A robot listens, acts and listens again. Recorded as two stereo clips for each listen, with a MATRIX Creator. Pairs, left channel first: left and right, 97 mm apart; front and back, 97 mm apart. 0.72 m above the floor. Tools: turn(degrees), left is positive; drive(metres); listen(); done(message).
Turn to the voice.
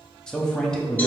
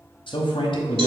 turn(degrees=10)
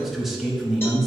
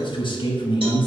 done("Found it: a man speaking, straight ahead.")